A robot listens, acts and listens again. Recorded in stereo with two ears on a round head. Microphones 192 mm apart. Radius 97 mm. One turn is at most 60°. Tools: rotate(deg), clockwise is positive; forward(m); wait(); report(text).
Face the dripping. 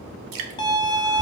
rotate(60)
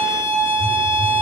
rotate(30)
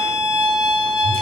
wait()
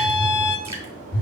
report("I heard dripping from this way, but can't make it out now.")